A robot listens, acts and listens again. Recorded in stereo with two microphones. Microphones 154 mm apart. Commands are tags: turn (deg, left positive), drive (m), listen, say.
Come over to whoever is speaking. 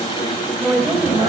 <turn deg="-30"/>
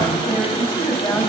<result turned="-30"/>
<turn deg="20"/>
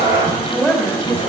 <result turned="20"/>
<drive m="1.0"/>
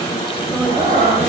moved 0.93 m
<listen/>
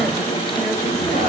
<listen/>
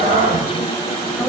<say>I heard a woman speaking from this way, but can't make it out now. I did not reach it.</say>